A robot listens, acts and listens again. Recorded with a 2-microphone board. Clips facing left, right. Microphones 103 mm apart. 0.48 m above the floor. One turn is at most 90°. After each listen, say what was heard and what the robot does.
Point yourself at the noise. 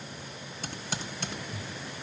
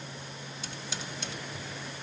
The typing on a keyboard: about 55° left or 125° left. Turn 55° left.
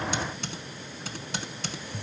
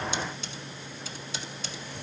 So it is at 70° left. Turn 70° left.
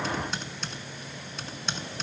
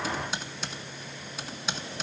Found it: typing on a keyboard, straight ahead.